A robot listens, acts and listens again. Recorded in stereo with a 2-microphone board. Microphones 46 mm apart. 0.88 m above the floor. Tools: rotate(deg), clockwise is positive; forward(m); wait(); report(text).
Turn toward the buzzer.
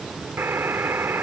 rotate(60)
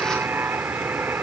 rotate(55)
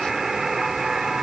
report("Facing the buzzer.")